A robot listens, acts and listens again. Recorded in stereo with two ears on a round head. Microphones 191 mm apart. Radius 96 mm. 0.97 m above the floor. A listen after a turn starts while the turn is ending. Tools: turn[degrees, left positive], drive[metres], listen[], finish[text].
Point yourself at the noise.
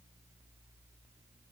Action: listen[]
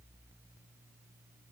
Action: listen[]
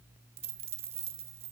Thought: The dropped coin: about 30° right or 150° right.
Action: turn[-30]
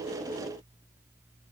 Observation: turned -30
Action: listen[]
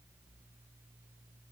Action: finish[I heard a dropped coin, but can't make it out now. It was about straight ahead or 120° right.]